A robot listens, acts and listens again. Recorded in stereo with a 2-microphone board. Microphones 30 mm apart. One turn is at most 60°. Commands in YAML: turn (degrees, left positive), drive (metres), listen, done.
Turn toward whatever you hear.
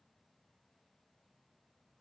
listen: true
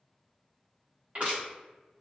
turn: -50
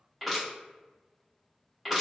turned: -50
done: "Found it: crushing, straight ahead, 1 to 2 m away."